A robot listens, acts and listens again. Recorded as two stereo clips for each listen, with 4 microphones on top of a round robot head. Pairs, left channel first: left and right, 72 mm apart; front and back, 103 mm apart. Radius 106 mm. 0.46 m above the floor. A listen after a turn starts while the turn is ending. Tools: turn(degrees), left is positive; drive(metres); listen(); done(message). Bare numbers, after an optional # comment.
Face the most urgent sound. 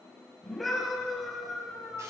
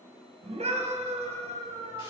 # The scream: straight behind.
turn(180)
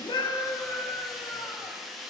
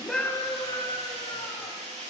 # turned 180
# The scream is now 40° left.
turn(40)
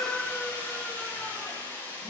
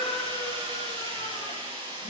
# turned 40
listen()
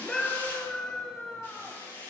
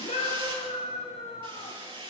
# The scream is now 10° left.
turn(10)
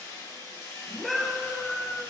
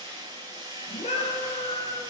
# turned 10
done("Facing the scream, over 4 m away.")